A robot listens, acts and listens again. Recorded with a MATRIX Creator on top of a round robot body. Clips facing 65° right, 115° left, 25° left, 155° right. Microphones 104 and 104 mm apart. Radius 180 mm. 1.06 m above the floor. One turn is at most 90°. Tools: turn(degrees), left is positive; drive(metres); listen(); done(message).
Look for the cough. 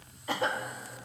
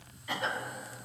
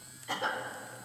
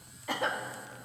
turn(degrees=-90)
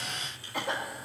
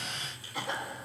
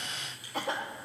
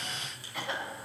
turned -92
turn(degrees=-30)
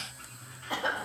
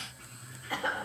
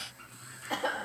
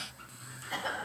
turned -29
done("Facing the cough.")